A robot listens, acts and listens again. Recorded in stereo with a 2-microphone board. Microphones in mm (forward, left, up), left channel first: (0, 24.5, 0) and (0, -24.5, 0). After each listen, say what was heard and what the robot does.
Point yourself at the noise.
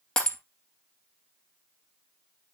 Turn 30° left.
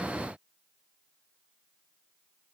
Keep listening.
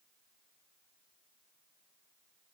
I heard breaking glass, but can't make it out now. It was about 20° right or 140° left.